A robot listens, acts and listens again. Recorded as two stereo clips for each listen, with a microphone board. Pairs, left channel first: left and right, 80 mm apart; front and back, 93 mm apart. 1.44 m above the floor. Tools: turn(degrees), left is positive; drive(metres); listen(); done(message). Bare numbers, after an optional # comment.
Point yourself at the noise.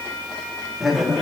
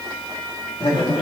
done("Facing the laughter.")